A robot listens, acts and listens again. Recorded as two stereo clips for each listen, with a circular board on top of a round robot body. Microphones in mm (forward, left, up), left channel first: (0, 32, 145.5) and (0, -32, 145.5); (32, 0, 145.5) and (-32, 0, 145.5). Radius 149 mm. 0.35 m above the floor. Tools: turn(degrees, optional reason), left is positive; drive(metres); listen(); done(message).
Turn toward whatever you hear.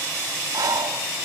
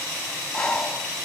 turn(degrees=-80, reason="The breathing: 80° right.")
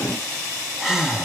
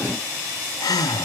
done("Facing the breathing, 1 to 2 m away.")